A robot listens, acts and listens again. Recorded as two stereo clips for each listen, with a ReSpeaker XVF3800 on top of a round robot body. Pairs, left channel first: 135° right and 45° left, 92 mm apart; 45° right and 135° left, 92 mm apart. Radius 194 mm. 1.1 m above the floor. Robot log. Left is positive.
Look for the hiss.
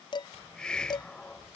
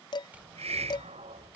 note: The hiss: 145° left.
cmd yaw +145
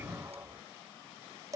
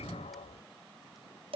note: The hiss is now 25° right.
cmd yaw -25
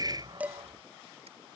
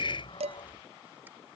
end: Facing the hiss.